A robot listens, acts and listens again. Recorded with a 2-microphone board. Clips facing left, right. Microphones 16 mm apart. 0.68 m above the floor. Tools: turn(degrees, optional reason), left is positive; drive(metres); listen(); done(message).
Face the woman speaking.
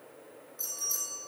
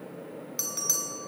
listen()
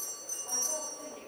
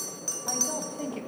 turn(degrees=-65, reason="The woman speaking: about 65° right or 115° right.")
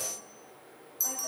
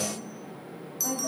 turn(degrees=-15, reason="So it is at 15° right.")
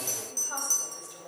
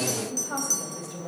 turn(degrees=-15, reason="The woman speaking is now 15° right.")
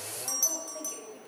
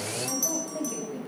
turn(degrees=-10, reason="The woman speaking is now 10° right.")
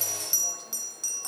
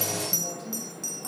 listen()
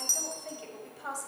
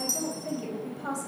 done("Facing the woman speaking.")